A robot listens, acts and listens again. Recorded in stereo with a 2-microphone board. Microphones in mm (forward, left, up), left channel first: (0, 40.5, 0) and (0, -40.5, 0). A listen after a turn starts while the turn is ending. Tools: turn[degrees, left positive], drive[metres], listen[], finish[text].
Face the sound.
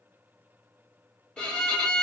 Action: turn[30]
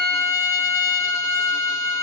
Thought: So it is at 140° left.
Action: turn[140]
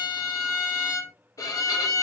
Thought: The violin is now 45° left.
Action: turn[45]
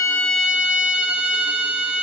Thought: The violin is now 15° right.
Action: turn[-15]
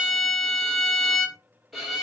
Action: finish[Found it: a violin, straight ahead, under 1 m away.]